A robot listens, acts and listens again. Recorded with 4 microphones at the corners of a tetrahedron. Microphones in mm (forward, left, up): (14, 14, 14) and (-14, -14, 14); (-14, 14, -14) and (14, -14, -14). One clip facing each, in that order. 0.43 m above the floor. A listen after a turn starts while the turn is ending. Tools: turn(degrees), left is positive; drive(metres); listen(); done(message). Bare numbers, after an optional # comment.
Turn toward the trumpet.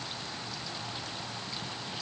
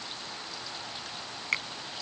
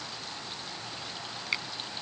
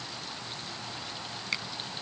listen()
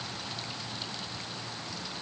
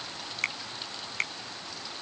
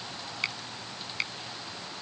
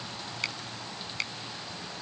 listen()
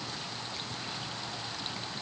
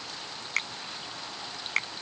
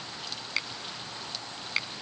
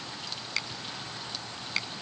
done("I can't make out a trumpet, only a finger snap.")